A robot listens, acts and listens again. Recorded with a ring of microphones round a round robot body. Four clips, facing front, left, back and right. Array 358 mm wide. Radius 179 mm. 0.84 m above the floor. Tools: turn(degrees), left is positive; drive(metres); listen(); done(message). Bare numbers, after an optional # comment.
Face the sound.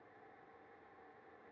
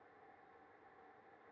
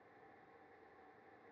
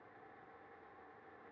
listen()
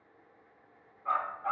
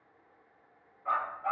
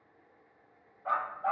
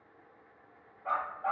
# The dog barking: 140° right.
turn(-140)
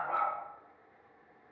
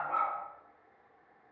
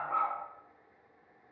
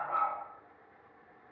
done("Facing the dog barking, 1 to 2 m away.")